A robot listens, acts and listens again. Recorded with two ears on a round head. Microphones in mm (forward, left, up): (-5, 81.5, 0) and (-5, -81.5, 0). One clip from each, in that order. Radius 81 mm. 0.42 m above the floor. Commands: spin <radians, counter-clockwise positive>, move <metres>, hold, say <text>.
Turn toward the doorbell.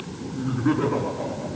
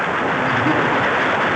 hold
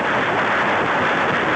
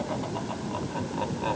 hold
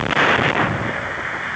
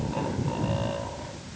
say I can't make out a doorbell.